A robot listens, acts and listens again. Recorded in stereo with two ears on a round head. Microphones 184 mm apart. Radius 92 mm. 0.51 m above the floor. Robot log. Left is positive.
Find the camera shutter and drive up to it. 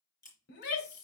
note: The camera shutter: about 20° left or 160° left.
cmd yaw +20
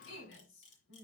note: So it is at 145° left.
cmd yaw +145
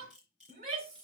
cmd fwd 1.0
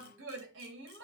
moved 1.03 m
cmd idle
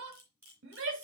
note: The camera shutter is now 10° right.
cmd yaw -10
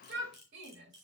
cmd fwd 1.0
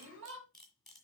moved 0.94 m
cmd fwd 1.0
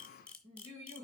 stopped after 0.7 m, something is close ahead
end: I am next to the camera shutter.